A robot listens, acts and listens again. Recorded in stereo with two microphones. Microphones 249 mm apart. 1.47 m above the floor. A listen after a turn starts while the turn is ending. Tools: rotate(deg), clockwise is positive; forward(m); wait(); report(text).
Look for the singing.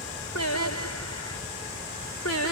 rotate(-90)
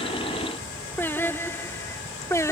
rotate(-10)
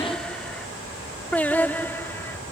rotate(-10)
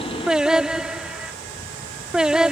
report("Facing the singing.")